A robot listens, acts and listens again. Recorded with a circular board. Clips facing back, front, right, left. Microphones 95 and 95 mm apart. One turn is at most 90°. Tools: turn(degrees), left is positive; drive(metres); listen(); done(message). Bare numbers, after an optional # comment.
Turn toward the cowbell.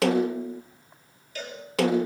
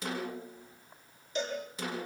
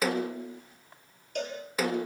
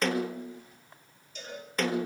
# The cowbell: 70° right.
turn(-70)
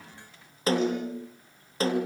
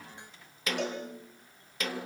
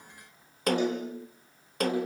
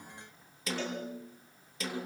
listen()
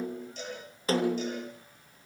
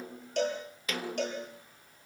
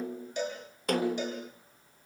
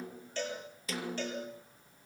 # The cowbell is now 20° right.
turn(-20)
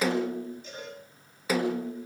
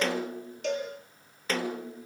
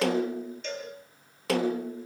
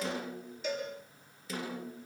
done("Facing the cowbell.")